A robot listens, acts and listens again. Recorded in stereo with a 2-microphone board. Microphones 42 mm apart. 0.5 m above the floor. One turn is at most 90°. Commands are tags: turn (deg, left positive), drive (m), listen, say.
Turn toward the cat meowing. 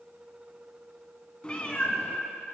<turn deg="35"/>
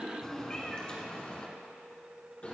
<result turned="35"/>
<turn deg="35"/>
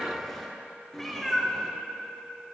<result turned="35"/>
<turn deg="10"/>
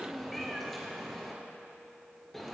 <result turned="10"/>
<say>Facing the cat meowing.</say>